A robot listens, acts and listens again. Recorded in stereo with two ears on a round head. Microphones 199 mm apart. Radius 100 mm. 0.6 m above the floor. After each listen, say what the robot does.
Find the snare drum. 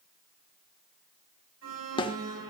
Turn 20° left.
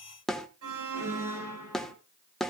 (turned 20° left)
Found it: a snare drum, straight ahead.